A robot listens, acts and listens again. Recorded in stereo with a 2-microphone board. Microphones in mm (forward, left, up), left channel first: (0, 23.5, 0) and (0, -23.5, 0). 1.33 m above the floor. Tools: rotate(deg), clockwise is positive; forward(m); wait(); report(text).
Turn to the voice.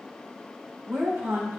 rotate(65)
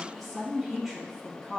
report("Facing the woman speaking.")